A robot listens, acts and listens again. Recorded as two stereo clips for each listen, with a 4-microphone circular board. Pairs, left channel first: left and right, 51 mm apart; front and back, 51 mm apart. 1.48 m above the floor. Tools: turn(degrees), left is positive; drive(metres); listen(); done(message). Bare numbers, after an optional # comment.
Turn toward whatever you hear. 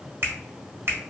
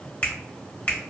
# The finger snap: 50° right.
turn(-50)
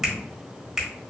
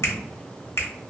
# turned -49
done("Found it: a finger snap, straight ahead.")